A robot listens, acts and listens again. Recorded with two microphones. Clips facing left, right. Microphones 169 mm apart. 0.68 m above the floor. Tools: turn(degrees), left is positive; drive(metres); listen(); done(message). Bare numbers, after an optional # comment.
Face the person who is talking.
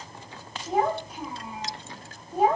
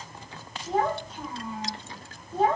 turn(30)
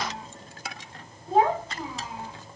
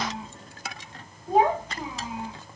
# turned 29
# So it is at 15° right.
turn(-15)
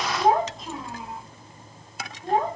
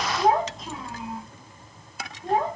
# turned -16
done("Facing the child speaking.")